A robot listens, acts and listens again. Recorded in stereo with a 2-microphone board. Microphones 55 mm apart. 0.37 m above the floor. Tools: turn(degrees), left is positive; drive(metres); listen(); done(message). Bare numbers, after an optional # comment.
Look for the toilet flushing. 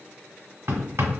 listen()
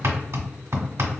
listen()
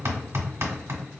done("I can't make out a toilet flushing, only hammering.")